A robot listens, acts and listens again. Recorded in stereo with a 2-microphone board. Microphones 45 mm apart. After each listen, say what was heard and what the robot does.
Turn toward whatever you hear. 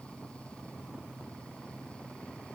Keep listening.
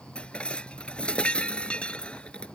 The dishes clattering: about 25° left or 155° left. Turn 25° left.
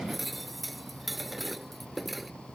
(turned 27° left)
Facing the dishes clattering.